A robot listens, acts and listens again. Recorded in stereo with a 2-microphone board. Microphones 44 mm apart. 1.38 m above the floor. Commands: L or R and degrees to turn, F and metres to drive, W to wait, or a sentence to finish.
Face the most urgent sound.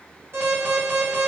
R55
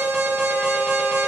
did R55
Facing the alarm.